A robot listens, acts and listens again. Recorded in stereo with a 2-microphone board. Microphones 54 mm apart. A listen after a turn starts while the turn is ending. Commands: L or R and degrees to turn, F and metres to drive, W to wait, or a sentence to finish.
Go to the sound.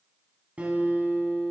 R25
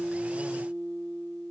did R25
R130
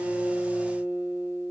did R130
R50
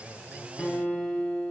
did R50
L15
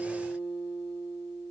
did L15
F1.0
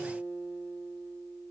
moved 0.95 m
F1.0
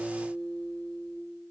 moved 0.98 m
L10
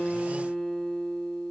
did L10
F1.0
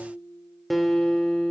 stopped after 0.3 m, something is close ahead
Arrived at the guitar, straight ahead.